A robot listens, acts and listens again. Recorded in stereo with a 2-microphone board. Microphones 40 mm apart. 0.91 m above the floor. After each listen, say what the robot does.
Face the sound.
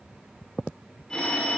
Turn 15° left.
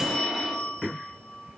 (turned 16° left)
Facing the phone ringing, 1 to 2 m away.